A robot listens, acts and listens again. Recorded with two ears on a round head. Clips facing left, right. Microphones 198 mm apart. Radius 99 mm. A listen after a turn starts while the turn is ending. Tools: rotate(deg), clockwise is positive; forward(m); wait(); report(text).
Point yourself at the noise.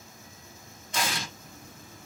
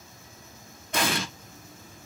rotate(50)
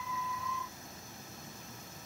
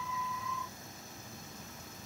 wait()
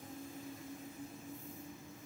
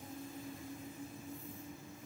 report("I heard an explosion, but can't make it out now. It was about straight ahead or 80° right.")